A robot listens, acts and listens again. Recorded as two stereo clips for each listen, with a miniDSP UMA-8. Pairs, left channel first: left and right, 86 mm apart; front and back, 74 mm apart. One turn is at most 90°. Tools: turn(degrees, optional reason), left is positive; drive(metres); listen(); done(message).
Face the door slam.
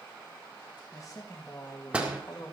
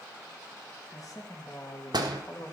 turn(degrees=-90, reason="The door slam: 165° right.")
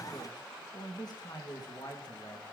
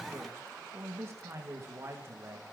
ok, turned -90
turn(degrees=-75, reason="Nothing new. It was at 75° right.")
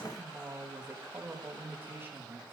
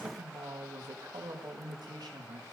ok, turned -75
done("I heard a door slam from this way, but can't make it out now.")